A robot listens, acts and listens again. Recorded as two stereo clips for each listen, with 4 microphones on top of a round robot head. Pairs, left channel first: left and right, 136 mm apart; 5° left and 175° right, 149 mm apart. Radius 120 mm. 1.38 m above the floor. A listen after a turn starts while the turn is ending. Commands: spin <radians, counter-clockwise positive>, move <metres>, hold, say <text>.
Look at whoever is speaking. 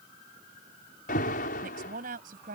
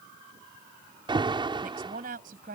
spin -2.27
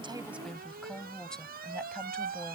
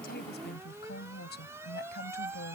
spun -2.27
say Found it: a woman speaking, straight ahead.